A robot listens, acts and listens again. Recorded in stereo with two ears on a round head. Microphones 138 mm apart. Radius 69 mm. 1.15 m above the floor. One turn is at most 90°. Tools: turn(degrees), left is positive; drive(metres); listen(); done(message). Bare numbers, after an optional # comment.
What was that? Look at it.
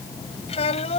# The child speaking: about 45° left or 135° left.
turn(45)
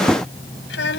# So it is at 95° left.
turn(90)
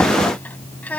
# The child speaking is now 10° left.
turn(10)
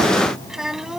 done("Found it: a child speaking, straight ahead.")